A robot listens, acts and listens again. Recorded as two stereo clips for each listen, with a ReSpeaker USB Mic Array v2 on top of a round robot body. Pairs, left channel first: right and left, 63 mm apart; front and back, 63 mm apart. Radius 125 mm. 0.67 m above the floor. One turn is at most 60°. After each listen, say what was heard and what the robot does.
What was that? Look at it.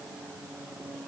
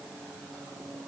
Keep listening.
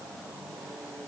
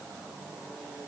Keep listening.
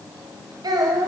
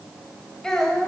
The child speaking: 80° left. Turn 60° left.
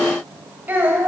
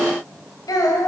The child speaking is now 25° left. Turn 25° left.
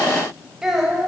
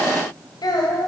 Found it: a child speaking, straight ahead, 2 to 4 m away.